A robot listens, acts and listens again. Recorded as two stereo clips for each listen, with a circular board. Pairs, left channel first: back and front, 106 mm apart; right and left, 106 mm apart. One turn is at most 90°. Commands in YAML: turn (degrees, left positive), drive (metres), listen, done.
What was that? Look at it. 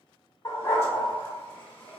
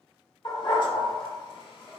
turn: -90
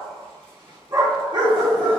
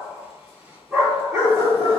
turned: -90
turn: 40
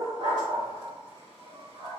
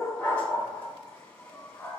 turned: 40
turn: -15
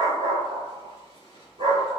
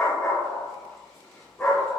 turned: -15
done: "Facing the dog barking."